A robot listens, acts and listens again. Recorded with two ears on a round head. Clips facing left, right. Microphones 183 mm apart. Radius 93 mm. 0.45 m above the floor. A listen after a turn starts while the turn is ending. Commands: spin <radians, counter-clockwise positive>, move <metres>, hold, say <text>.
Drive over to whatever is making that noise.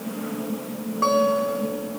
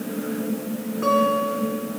spin 1.22
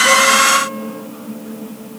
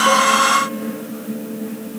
hold
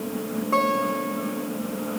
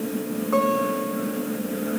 spin 0.52
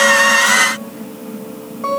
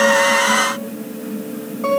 move 1.0
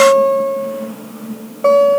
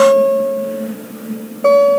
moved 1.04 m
move 1.0
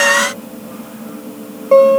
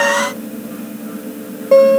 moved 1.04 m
spin -0.17
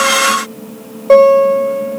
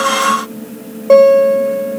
move 1.0
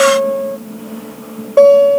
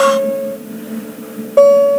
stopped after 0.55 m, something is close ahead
say I am next to the guitar.